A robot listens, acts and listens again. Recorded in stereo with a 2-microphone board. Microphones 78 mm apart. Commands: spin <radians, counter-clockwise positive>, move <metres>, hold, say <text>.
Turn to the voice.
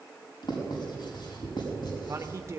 spin -0.61
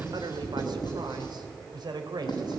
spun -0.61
spin -2.01
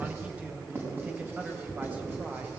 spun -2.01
spin -0.35
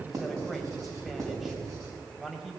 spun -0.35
say Facing the man speaking.